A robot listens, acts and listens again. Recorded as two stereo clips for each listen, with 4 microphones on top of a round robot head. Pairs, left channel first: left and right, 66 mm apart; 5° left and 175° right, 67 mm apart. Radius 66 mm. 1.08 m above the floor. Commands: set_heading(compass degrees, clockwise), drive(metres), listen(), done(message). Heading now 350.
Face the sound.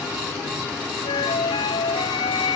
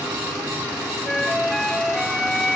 set_heading(260)
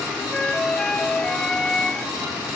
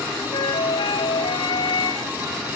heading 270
set_heading(260)
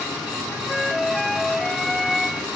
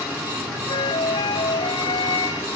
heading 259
done("Facing the flute.")